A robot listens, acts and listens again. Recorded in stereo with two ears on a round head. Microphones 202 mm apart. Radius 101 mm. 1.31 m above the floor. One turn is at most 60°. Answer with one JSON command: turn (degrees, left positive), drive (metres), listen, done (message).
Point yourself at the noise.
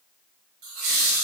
{"turn": -60}
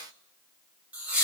{"done": "Found it: laughter, straight ahead."}